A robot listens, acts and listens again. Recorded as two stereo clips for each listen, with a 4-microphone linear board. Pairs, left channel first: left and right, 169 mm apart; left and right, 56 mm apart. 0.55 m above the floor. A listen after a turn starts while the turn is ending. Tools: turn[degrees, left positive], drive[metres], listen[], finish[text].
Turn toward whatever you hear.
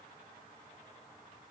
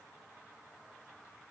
Action: listen[]
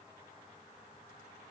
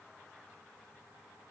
Action: listen[]
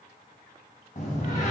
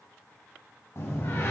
Thought: The door slam: about 50° left or 130° left.
Action: turn[50]
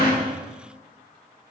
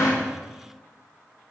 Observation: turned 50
Action: listen[]
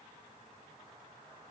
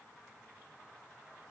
Action: finish[I heard a door slam, but can't make it out now. It was about straight ahead or 80° left.]